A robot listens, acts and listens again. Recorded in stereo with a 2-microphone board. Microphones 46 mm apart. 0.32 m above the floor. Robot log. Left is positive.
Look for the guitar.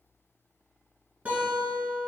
note: The guitar: about 25° right or 155° right.
cmd yaw -25
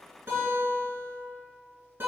note: So it is at 130° right.
cmd yaw -130
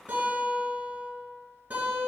note: The guitar is now 45° right.
cmd yaw -45
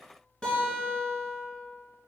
note: The guitar is now 15° left.
cmd yaw +15
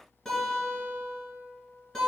end: Found it: a guitar, straight ahead.